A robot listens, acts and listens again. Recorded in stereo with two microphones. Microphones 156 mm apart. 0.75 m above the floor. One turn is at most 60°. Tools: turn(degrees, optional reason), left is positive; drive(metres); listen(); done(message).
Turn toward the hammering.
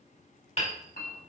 turn(degrees=45, reason="The hammering: about 45° left or 135° left.")
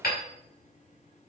turn(degrees=60, reason="So it is at 90° left.")
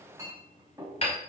turn(degrees=40, reason="The hammering is now 40° left.")
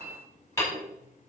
turn(degrees=20, reason="The hammering is now 20° left.")
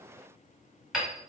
done("Found it: hammering, straight ahead, over 4 m away.")